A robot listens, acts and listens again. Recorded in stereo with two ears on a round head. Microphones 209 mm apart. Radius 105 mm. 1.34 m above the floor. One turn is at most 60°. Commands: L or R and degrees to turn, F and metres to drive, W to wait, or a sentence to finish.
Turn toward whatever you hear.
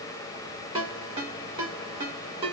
R25
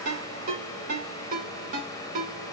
R60
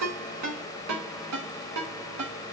R60
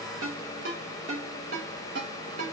R40
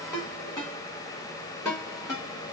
L15
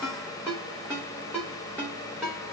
Found it: a ringtone, straight ahead, 2 to 4 m away.